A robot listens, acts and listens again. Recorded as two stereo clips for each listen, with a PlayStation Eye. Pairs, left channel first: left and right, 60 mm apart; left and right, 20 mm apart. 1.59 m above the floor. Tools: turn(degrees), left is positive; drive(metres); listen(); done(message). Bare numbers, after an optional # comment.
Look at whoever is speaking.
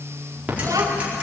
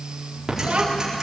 # The child speaking: about 70° right or 110° right.
turn(-70)
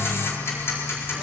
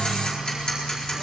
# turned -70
listen()
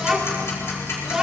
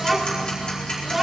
done("Facing the child speaking, 2 to 4 m away.")